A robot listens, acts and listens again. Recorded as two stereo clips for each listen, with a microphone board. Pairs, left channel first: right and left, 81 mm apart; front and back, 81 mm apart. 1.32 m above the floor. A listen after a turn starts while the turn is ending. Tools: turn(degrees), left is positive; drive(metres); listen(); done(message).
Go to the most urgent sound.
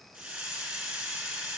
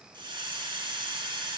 listen()
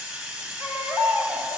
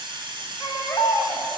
turn(degrees=30)
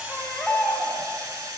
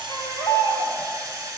drive(metres=1.0)
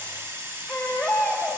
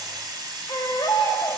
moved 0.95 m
drive(metres=1.0)
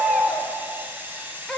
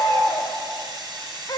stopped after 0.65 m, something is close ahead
done("I am next to the baby crying.")